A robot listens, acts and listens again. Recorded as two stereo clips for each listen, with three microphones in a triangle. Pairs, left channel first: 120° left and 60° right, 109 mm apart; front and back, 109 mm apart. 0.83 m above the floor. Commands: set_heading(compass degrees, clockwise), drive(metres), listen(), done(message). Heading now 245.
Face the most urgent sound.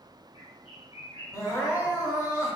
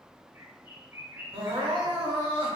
set_heading(70)
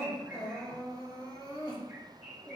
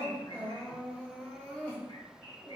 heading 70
set_heading(350)
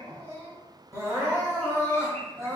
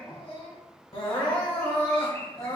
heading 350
done("Found it: crying, straight ahead, 1 to 2 m away.")